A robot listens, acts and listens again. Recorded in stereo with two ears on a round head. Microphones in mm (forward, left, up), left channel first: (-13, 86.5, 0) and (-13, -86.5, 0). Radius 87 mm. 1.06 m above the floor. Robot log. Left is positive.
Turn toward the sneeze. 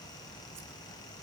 cmd idle
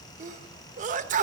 note: The sneeze: about 45° right or 135° right.
cmd yaw -45
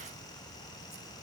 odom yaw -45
cmd idle
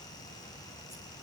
end: I heard a sneeze, but can't make it out now. It was about straight ahead or 90° right.